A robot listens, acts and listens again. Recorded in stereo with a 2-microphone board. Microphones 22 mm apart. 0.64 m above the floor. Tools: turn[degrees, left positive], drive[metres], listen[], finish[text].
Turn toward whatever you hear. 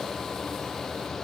Action: listen[]
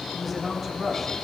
Action: turn[30]
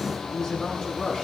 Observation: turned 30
Thought: So it is at 150° left.
Action: turn[150]
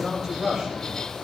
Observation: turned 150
Thought: The man speaking is now 30° right.
Action: turn[-30]
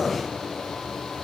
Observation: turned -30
Action: listen[]
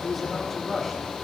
Action: finish[Found it: a man speaking, straight ahead.]